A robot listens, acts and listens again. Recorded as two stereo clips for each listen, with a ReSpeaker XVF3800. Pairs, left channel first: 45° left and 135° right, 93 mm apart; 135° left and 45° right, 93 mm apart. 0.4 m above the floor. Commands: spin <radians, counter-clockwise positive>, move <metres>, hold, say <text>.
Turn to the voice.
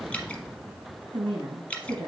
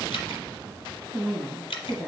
spin -2.62
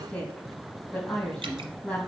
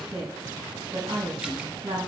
spin -0.61
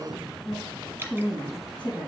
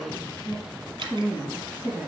spin 0.35
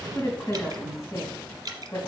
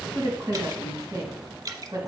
say Found it: a woman speaking, straight ahead, 2 to 4 m away.